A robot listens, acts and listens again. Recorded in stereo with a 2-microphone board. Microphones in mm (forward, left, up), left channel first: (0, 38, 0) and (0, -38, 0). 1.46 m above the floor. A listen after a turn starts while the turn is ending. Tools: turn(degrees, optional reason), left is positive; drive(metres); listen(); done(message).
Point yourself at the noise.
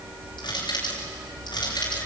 turn(degrees=90)
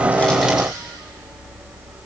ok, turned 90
listen()
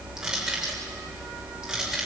turn(degrees=-10, reason="The crushing is now 10° right.")
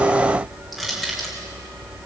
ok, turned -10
done("Found it: crushing, straight ahead.")